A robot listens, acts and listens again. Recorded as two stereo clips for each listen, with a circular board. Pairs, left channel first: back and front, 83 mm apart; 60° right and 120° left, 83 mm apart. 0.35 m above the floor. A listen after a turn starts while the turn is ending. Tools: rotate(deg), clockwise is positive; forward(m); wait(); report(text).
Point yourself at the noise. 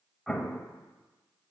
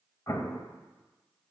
rotate(95)
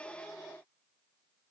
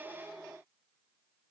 report("I heard an explosion from this way, but can't make it out now.")